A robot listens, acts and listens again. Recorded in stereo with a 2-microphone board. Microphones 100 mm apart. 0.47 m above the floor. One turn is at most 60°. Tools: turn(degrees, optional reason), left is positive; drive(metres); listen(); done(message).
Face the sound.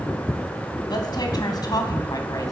turn(degrees=45, reason="The woman speaking: about 45° left or 135° left.")
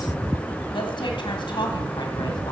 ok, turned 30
turn(degrees=55, reason="The woman speaking: about 55° left or 125° left.")
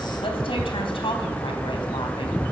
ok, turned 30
turn(degrees=60, reason="So it is at 110° left.")
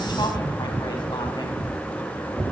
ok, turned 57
turn(degrees=55, reason="Nothing new. It was at 55° left.")
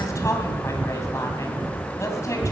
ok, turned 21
turn(degrees=30, reason="The woman speaking is now 30° left.")
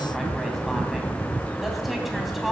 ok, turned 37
done("Found it: a woman speaking, straight ahead, 2 to 4 m away.")